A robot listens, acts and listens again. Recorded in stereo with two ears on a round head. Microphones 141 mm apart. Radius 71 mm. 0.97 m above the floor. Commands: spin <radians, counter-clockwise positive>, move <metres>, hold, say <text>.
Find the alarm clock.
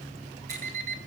spin -0.87
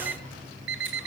spin -1.31
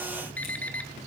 spin 0.17
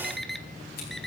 say Facing the alarm clock.